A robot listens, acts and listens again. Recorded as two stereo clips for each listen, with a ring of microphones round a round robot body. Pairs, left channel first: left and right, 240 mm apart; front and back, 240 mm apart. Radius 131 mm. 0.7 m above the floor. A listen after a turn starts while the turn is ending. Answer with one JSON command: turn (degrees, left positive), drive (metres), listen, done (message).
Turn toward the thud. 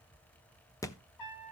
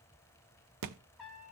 {"turn": 170}
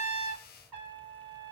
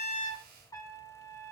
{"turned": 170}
{"done": "Facing where the thud came from. I can't hear it now."}